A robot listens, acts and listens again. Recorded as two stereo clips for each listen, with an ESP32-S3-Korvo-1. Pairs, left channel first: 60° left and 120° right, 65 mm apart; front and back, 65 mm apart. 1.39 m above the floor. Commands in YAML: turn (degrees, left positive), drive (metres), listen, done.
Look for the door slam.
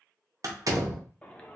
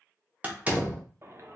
turn: -120
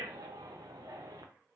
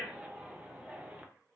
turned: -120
done: "Facing where the door slam came from. I can't hear it now."